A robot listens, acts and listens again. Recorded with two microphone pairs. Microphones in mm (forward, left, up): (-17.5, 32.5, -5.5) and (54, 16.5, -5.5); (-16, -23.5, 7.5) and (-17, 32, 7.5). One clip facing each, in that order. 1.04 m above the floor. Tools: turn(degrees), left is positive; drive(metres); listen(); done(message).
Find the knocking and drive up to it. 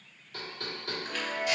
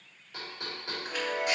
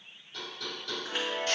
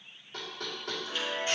turn(degrees=55)
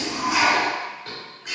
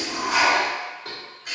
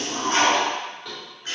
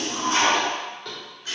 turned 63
turn(degrees=-10)
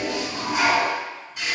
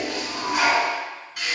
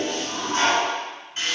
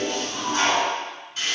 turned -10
listen()
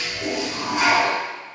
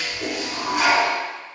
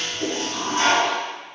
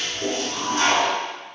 listen()
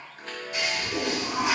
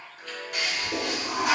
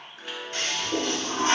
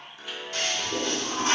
done("Facing where the knocking came from. I can't hear it now. I did not reach it.")